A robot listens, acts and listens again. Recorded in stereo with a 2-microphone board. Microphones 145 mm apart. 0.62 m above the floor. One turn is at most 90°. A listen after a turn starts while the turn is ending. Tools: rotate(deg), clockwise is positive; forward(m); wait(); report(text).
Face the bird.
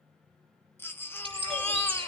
rotate(40)
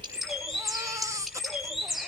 report("Found it: a bird, straight ahead, over 4 m away.")